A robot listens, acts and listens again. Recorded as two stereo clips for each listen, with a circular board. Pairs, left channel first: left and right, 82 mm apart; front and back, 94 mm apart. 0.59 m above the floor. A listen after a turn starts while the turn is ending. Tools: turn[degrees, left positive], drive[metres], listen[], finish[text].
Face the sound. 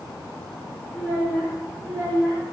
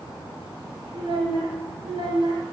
Thought: The child speaking: 145° right.
Action: turn[-145]
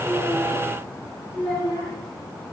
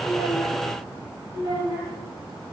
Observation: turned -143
Thought: The child speaking is now 15° left.
Action: turn[15]
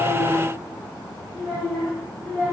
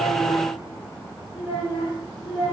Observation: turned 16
Action: finish[Found it: a child speaking, straight ahead.]